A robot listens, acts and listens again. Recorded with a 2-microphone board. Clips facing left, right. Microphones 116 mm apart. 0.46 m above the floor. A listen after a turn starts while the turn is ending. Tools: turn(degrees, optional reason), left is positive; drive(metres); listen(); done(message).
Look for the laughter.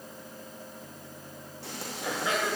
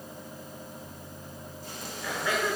turn(degrees=20, reason="The laughter: about 20° left or 160° left.")
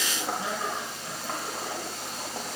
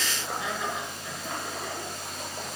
turn(degrees=35, reason="The laughter: about 35° left or 145° left.")
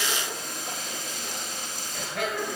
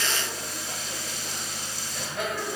turn(degrees=120, reason="So it is at 120° left.")
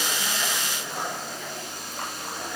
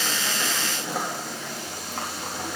listen()
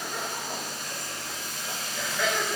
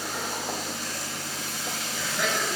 turn(degrees=-10, reason="The laughter is now 10° right.")
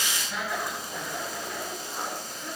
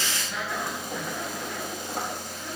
done("Found it: laughter, straight ahead, over 4 m away.")